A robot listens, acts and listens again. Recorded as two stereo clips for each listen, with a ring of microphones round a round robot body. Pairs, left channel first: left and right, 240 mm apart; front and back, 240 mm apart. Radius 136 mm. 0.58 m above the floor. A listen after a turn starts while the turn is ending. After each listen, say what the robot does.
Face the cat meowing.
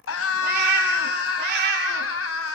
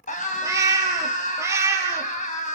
Turn 100° right.
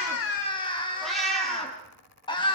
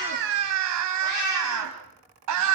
Found it: a cat meowing, straight ahead, over 4 m away.